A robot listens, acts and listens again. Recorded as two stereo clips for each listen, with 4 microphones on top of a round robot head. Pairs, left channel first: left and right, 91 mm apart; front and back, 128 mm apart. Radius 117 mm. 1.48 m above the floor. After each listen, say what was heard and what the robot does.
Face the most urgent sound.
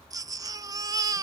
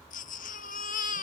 The baby crying: 40° right. Turn 40° right.
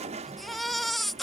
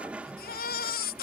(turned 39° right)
Facing the baby crying.